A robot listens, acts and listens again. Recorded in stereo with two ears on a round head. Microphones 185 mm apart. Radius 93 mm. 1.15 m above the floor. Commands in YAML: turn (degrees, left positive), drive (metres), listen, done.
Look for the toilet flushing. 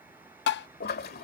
turn: 50
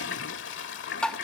turn: 70
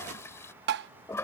turn: 15
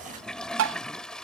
done: "Found it: a toilet flushing, straight ahead."